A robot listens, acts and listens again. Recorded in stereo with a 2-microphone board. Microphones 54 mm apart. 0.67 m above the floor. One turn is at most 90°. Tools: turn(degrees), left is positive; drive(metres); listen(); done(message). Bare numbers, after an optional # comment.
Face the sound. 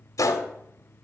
turn(90)
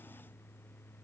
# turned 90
done("Facing where the gunshot came from. I can't hear it now.")